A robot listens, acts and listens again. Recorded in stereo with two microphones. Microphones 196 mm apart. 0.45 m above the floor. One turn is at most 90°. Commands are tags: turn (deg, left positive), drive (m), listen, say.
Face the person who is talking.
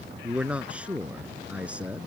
<turn deg="-30"/>
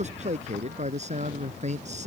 <turn deg="-90"/>
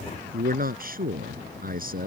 <turn deg="-50"/>
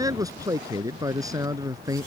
<turn deg="-20"/>
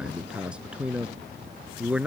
<say>Found it: a man speaking, straight ahead.</say>